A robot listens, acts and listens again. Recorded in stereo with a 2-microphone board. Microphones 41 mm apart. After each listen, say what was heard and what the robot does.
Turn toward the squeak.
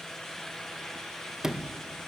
Keep listening.
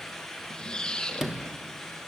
The squeak: about 20° left or 160° left. Turn 20° left.
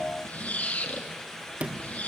So it is at 145° left. Turn 145° left.
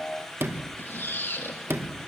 The squeak is now 60° left. Turn 60° left.
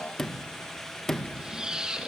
The squeak is now 20° right. Turn 20° right.
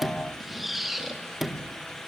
Found it: a squeak, straight ahead.